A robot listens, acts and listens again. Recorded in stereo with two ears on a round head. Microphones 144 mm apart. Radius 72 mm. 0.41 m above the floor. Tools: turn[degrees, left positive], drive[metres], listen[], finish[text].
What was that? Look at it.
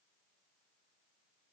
Action: listen[]
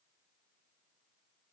Action: listen[]
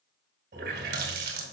Thought: The running tap: about 70° right or 110° right.
Action: turn[-70]
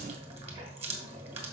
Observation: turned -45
Thought: So it is at 45° right.
Action: turn[-45]
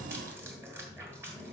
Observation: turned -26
Thought: The running tap is now 20° right.
Action: turn[-20]
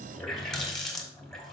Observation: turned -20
Action: finish[Facing the running tap.]